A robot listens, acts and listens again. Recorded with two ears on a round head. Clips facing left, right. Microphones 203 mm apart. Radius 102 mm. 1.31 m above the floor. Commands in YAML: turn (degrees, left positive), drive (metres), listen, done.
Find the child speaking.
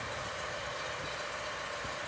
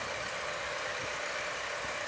listen: true
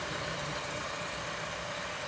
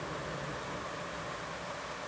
listen: true
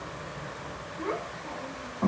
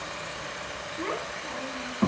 turn: -45
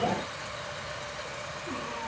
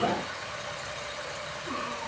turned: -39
listen: true
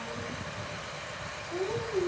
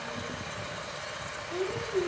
turn: -10
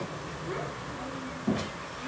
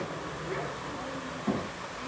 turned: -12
done: "Facing the child speaking, over 4 m away."